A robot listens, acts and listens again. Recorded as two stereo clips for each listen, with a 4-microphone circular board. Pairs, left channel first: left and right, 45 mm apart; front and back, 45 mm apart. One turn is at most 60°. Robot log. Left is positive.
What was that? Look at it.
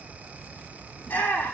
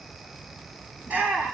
note: The shout: 125° left.
cmd yaw +60
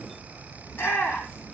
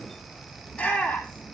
note: The shout is now 65° left.
cmd yaw +60
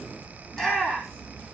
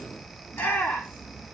note: The shout is now 10° left.
cmd yaw +10
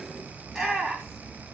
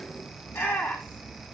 end: Facing the shout, over 4 m away.